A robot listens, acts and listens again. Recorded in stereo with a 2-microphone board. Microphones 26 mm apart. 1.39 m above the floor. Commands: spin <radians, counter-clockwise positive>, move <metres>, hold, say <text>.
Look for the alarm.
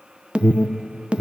spin -0.79
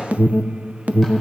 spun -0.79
spin -1.66
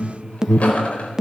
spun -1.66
spin -0.44
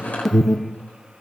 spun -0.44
spin 0.17
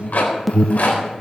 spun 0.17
say Facing the alarm.